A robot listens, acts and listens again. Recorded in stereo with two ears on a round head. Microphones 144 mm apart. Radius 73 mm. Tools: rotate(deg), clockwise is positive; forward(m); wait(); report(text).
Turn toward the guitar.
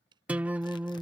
rotate(30)
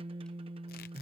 rotate(135)
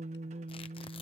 rotate(50)
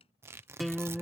report("Found it: a guitar, straight ahead.")